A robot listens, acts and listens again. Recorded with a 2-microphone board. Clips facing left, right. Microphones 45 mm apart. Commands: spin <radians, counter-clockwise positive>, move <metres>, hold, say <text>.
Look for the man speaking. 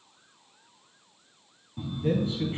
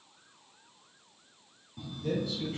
spin 0.61
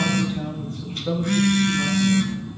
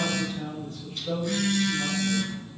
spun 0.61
spin 2.18
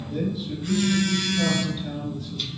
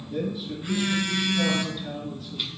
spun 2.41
say Found it: a man speaking, straight ahead.